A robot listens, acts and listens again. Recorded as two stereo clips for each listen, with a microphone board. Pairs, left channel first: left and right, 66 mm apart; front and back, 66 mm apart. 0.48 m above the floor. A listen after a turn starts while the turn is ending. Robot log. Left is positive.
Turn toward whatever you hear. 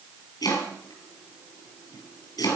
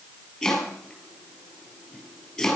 note: The chopping: 80° left.
cmd yaw +80
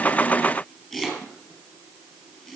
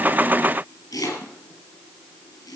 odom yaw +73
end: Found it: chopping, straight ahead.